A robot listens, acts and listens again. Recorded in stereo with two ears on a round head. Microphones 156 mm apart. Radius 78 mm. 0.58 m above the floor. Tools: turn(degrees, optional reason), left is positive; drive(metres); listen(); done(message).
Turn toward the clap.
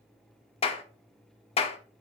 turn(degrees=35, reason="The clap: about 35° left or 145° left.")
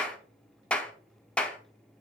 turn(degrees=10, reason="So it is at 10° left.")
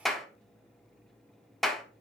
done("Facing the clap, under 1 m away.")